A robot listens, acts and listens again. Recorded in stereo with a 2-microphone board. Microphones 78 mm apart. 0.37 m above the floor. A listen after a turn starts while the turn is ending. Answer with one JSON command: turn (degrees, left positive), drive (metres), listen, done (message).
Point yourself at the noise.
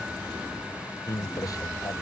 {"turn": 50}
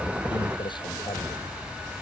{"turn": 80}
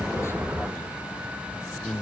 {"turn": 10}
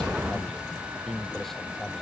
{"done": "Facing the man speaking."}